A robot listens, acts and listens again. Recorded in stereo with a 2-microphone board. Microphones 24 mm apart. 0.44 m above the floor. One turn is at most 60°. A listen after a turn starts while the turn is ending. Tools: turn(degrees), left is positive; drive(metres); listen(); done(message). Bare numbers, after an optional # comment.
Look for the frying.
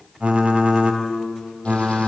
listen()
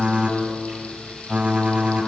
# The frying: about 60° left or 120° left.
turn(60)
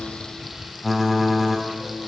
done("Found it: frying, straight ahead.")